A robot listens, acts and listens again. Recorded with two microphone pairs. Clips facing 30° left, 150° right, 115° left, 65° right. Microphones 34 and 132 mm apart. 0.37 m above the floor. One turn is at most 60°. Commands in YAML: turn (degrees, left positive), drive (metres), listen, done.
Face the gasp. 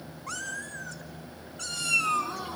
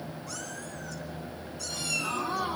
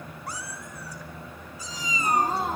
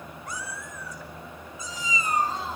turn: 60
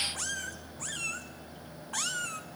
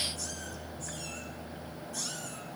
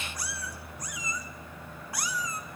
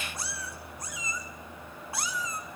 turn: 60
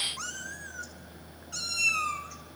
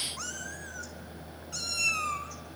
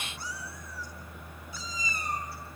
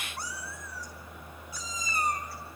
turn: 35
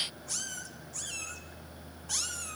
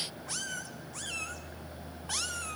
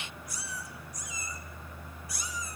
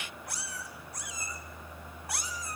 done: "Facing where the gasp came from. I can't hear it now."